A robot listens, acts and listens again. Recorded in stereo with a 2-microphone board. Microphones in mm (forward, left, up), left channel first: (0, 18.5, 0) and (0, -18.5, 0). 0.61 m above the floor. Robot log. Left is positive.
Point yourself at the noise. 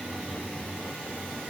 cmd idle
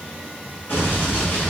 cmd yaw +90
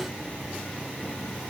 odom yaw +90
end: I heard an explosion from this way, but can't make it out now.